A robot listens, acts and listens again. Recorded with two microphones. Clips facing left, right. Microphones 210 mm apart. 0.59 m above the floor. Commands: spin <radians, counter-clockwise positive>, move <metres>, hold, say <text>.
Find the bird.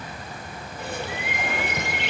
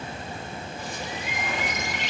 spin 1.05
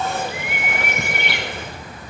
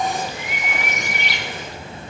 spin 1.05
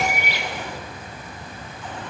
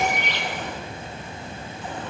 spin 0.17
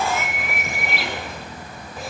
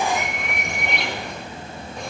say Found it: a bird, straight ahead.